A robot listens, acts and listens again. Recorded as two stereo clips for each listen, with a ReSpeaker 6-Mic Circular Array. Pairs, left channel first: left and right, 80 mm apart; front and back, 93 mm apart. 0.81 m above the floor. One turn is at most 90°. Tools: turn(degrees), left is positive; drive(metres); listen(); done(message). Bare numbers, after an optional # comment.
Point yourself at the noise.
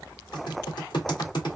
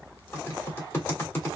# The typing on a keyboard: 65° left.
turn(65)
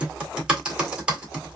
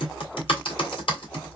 # The typing on a keyboard is now 10° right.
turn(-10)
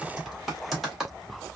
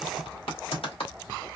done("Facing the typing on a keyboard, 1 to 2 m away.")